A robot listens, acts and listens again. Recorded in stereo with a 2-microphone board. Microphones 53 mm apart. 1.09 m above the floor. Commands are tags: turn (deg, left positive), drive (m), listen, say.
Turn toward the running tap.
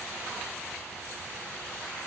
<listen/>
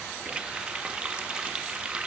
<turn deg="-20"/>
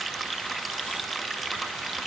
<say>Facing the running tap, under 1 m away.</say>